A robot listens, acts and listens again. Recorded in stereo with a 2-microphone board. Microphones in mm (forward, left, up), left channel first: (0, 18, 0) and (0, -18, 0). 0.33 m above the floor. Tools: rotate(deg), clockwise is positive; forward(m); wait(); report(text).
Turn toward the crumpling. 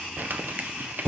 rotate(60)
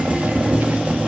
wait()
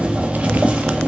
wait()
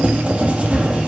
report("I heard crumpling, but can't make it out now. It was about straight ahead or 60° right.")